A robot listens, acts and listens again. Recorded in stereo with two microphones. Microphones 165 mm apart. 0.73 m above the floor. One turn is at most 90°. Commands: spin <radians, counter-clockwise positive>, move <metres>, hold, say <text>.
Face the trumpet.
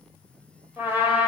spin -0.52
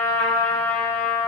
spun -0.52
spin 0.26
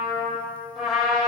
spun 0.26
say Found it: a trumpet, straight ahead, 2 to 4 m away.